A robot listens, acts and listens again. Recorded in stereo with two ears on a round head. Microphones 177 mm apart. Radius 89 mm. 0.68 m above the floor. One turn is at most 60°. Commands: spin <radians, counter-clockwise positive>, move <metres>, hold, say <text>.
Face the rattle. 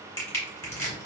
hold
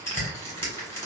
hold
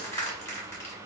say I can't make out a rattle, only crushing.